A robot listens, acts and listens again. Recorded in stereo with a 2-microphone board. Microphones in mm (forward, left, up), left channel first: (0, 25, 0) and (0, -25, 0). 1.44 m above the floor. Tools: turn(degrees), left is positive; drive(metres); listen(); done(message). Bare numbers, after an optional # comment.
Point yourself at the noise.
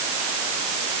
listen()
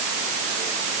listen()
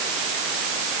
done("I can't make out anything.")